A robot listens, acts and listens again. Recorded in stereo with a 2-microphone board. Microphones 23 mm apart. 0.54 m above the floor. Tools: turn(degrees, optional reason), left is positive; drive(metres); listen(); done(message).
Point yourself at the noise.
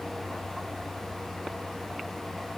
listen()
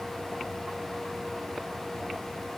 listen()
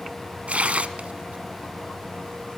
turn(degrees=-70, reason="The tearing paper: about 70° right or 110° right.")
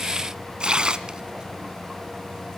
turn(degrees=-35, reason="So it is at 35° right.")
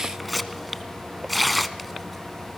done("Facing the tearing paper.")